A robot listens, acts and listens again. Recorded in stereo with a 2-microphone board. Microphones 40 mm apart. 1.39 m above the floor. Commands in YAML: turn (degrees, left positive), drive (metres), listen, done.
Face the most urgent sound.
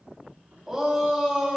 turn: -30
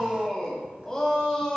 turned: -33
turn: 20
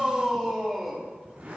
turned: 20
done: "Found it: a shout, straight ahead, 2 to 4 m away."